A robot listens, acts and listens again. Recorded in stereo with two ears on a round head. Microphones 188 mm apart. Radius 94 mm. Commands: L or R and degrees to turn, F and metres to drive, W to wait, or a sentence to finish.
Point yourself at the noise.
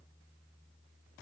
W
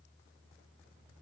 W
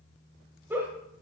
R30
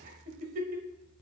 R140
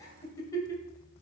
L15
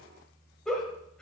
Facing the giggle, 1 to 2 m away.